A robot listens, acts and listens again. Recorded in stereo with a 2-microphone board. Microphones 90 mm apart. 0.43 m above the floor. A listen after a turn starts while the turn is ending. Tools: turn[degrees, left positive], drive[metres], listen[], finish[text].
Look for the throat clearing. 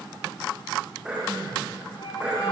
Action: turn[-30]
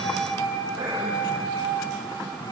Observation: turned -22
Action: listen[]
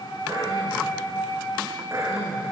Thought: So it is at 145° right.
Action: turn[-145]
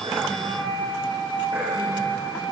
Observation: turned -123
Thought: Nothing new. It was at 20° right.
Action: turn[-20]
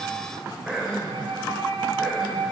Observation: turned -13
Action: finish[Facing the throat clearing, over 4 m away.]